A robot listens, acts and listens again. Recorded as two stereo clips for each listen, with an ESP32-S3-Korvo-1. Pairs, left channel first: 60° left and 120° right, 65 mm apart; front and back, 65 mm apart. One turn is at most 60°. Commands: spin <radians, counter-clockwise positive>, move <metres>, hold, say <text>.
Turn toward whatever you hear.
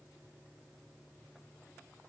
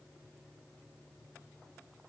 hold
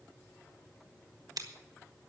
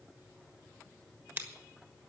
spin -1.05
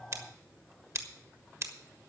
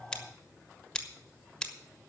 spin -1.05
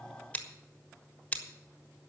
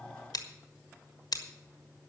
spin -0.17
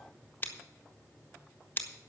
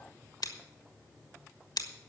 say Facing the scissors, 1 to 2 m away.